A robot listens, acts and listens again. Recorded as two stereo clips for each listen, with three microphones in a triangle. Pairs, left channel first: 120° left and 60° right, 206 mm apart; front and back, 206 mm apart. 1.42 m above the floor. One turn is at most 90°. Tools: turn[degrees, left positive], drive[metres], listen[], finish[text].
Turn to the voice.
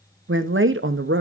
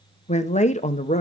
Thought: The woman speaking: 55° right.
Action: turn[-55]
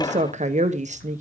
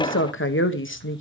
Thought: The woman speaking is now 10° right.
Action: turn[-10]
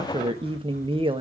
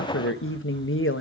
Action: finish[Facing the woman speaking, under 1 m away.]